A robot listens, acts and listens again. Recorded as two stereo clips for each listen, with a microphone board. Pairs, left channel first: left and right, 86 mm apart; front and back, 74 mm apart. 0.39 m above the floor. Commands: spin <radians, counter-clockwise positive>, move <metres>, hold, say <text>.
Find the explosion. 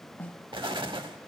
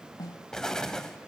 spin -1.40
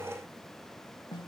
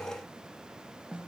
say I heard an explosion from this way, but can't make it out now.